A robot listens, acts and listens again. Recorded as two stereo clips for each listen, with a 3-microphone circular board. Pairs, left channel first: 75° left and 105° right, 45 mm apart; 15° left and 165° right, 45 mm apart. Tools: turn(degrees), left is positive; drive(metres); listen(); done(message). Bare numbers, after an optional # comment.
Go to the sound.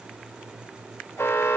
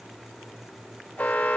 # The alarm: 70° left.
turn(70)
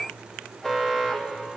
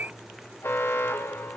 drive(1.0)
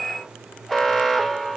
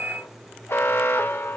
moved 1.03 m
drive(1.0)
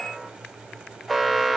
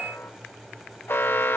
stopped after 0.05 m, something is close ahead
# The alarm is now 15° right.
turn(-15)
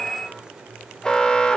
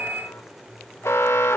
done("Arrived at the alarm, straight ahead.")